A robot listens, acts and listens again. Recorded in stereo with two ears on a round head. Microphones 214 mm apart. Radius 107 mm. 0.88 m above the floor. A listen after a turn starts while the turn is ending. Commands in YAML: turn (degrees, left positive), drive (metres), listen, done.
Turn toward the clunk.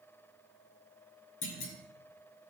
turn: 55
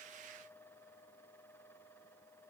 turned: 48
listen: true
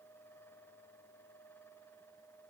done: "I heard a clunk, but can't make it out now. It was about 10° left or 75° left."